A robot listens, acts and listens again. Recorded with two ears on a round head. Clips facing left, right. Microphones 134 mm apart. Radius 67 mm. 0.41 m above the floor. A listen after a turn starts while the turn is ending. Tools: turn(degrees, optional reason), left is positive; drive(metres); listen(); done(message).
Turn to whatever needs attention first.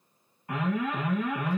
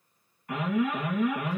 turn(degrees=25, reason="The alarm: about 25° left or 155° left.")
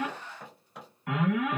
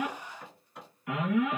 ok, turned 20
turn(degrees=130, reason="So it is at 130° left.")
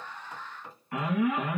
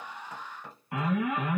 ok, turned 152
turn(degrees=-20, reason="The alarm is now 20° right.")
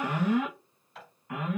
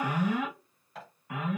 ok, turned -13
done("Facing the alarm.")